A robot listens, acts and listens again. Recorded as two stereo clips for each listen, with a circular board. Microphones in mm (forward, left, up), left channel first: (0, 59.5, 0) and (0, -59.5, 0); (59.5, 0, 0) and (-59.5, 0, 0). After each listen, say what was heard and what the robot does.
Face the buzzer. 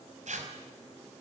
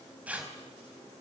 Keep listening.
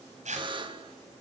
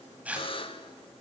The buzzer: 45° right. Turn 45° right.
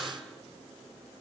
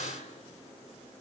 Keep listening.
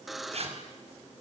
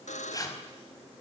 Facing the buzzer, 1 to 2 m away.